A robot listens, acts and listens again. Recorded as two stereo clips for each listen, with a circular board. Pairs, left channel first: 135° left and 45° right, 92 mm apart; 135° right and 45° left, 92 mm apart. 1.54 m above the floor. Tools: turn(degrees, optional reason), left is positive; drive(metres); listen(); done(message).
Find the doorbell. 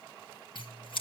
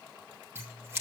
listen()
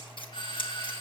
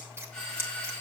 turn(degrees=145, reason="The doorbell: 145° left.")
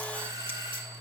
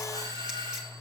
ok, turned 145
done("Found it: a doorbell, straight ahead.")